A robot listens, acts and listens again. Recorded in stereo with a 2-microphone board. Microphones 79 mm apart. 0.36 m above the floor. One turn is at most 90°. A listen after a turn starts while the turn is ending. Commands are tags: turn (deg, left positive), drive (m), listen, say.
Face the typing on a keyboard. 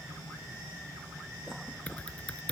<turn deg="15"/>
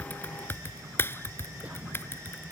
<turn deg="90"/>
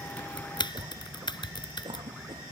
<turn deg="85"/>
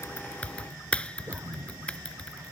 <turn deg="15"/>
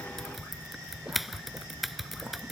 <say>Facing the typing on a keyboard.</say>